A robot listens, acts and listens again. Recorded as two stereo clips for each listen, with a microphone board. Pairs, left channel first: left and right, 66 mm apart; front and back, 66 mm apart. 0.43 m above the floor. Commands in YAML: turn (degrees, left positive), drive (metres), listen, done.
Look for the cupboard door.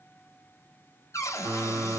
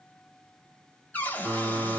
turn: 60
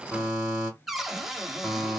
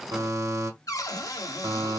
done: "Found it: a cupboard door, straight ahead, under 1 m away."